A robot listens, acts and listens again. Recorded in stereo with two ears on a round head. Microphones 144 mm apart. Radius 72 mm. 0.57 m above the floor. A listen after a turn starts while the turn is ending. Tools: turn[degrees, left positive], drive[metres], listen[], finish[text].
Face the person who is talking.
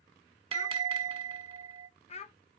Thought: The child speaking: about 40° left or 140° left.
Action: turn[40]
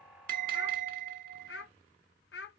Thought: So it is at 100° left.
Action: turn[100]
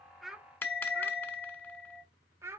Thought: The child speaking is now 15° right.
Action: turn[-15]
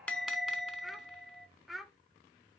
Action: finish[Facing the child speaking, under 1 m away.]